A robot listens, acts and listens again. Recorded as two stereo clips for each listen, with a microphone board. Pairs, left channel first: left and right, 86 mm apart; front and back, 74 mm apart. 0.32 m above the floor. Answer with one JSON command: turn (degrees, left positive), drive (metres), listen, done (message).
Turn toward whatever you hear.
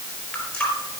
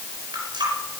{"turn": 170}
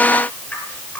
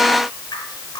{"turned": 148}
{"turn": 25}
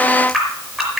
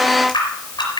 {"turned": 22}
{"done": "Found it: a running tap, straight ahead, over 4 m away."}